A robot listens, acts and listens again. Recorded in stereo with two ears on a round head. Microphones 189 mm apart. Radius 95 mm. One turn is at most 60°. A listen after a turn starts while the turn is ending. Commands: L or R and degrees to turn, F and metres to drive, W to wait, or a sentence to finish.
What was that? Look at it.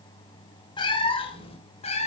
L30
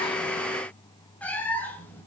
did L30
L10
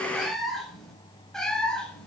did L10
Facing the cat meowing.